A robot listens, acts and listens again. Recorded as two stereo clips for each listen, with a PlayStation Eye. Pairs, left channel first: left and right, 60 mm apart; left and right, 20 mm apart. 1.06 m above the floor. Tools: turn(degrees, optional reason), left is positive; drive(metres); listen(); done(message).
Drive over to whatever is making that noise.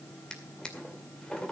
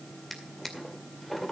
turn(degrees=30)
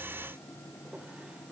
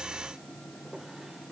listen()
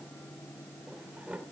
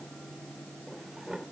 turn(degrees=-20, reason="So it is at 20° right.")
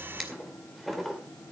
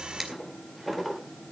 drive(metres=1.0)
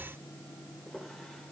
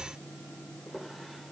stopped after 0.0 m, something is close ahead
done("Blocked. The drawer is further on, straight ahead.")